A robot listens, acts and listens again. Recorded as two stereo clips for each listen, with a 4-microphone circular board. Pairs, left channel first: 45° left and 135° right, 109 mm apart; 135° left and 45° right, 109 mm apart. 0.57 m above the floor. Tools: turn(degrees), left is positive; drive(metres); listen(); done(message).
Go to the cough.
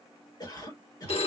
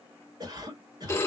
drive(metres=1.0)
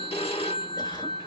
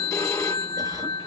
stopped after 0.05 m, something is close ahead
listen()
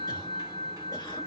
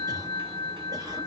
done("Something is in my way. I am facing the cough but have not reached it.")